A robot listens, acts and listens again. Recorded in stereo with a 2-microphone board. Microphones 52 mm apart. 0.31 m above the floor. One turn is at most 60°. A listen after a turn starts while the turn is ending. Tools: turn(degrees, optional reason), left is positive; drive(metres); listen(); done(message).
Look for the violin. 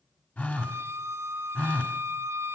turn(degrees=-55, reason="The violin: about 55° right or 125° right.")
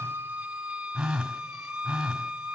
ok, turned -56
turn(degrees=-15, reason="So it is at 15° right.")
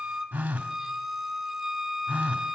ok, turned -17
done("Facing the violin, 2 to 4 m away.")